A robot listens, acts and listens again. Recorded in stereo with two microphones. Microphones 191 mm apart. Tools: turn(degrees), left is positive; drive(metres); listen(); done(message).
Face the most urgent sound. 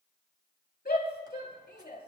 turn(degrees=50)
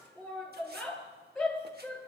done("Facing the shout, over 4 m away.")